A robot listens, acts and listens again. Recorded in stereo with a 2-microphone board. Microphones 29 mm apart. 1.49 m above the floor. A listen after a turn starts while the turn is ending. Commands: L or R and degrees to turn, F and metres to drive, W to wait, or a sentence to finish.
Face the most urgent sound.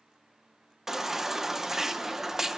R30
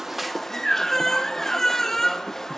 L15
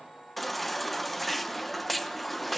Found it: a baby crying, straight ahead, under 1 m away.